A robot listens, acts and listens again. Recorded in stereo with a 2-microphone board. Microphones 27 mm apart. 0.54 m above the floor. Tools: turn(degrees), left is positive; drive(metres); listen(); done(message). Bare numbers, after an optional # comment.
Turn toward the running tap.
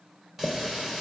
turn(-30)
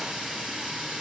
# So it is at 135° right.
turn(-135)
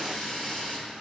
# The running tap is now 35° left.
turn(35)
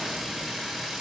# The running tap is now 10° right.
turn(-10)
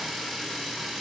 done("Facing the running tap, 1 to 2 m away.")